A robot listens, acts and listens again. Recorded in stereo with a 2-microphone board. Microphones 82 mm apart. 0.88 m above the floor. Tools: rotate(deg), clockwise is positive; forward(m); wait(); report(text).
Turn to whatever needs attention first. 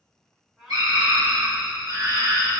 rotate(55)
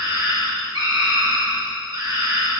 rotate(65)
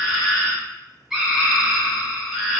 report("Facing the scream, 1 to 2 m away.")